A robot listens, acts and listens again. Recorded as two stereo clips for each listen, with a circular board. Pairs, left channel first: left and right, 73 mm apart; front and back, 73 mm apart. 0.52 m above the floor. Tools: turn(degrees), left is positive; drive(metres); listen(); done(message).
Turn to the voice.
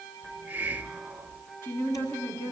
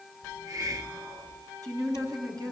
turn(degrees=145)
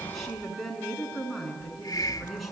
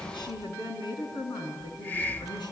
done("Found it: a woman speaking, straight ahead.")